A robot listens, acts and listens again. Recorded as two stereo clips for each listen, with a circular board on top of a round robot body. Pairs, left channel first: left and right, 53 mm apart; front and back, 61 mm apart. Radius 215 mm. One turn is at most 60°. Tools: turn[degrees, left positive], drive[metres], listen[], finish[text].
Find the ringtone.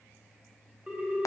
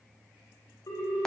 Thought: The ringtone: 15° right.
Action: turn[-15]
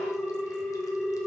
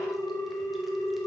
Action: finish[Found it: a ringtone, straight ahead, 1 to 2 m away.]